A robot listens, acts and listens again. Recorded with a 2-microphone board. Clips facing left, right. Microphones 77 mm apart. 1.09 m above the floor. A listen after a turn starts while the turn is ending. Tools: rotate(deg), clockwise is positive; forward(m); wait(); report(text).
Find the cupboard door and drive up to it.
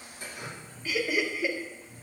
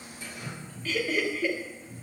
rotate(40)
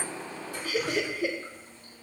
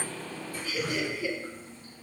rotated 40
wait()
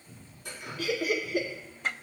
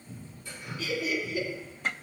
forward(1.0)
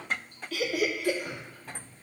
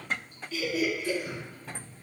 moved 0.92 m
rotate(-15)
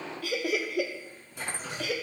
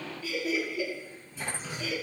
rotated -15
wait()
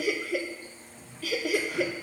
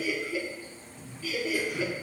forward(1.0)
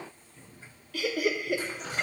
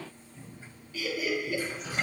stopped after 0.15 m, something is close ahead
report("Arrived at the cupboard door, straight ahead.")